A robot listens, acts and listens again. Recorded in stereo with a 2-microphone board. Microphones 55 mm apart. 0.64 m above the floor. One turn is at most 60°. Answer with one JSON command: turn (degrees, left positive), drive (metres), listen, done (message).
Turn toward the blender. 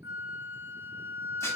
{"listen": true}
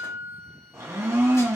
{"turn": -60}
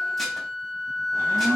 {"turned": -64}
{"turn": -55}
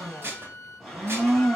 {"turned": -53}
{"done": "Found it: a blender, straight ahead."}